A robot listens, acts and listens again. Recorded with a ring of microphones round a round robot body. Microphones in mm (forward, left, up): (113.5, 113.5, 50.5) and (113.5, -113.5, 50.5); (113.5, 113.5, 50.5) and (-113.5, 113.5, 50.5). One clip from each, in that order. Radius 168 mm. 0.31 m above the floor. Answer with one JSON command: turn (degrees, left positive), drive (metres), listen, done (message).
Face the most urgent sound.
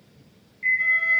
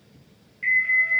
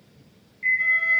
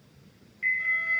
{"turn": -140}
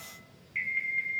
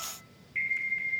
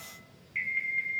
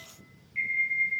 {"turn": 15}
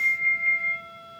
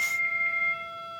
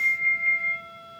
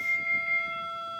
{"done": "Found it: an alarm, straight ahead, over 4 m away."}